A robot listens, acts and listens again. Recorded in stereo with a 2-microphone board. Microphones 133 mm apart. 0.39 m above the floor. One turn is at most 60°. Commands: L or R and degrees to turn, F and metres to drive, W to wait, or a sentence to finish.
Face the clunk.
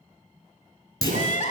L30
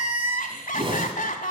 W
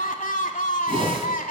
I heard a clunk, but can't make it out now. It was about straight ahead or 120° left.